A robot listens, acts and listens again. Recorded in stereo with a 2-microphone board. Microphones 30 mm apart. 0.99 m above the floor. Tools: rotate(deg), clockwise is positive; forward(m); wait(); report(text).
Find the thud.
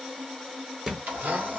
rotate(20)
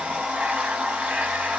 wait()
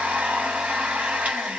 report("I heard a thud, but can't make it out now. It was about straight ahead or 140° right.")